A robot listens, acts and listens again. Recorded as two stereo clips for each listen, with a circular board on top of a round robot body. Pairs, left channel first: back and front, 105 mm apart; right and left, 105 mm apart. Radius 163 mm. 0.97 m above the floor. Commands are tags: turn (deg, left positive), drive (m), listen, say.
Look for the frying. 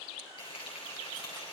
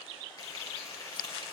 <turn deg="-145"/>
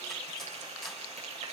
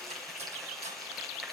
<say>Found it: frying, straight ahead.</say>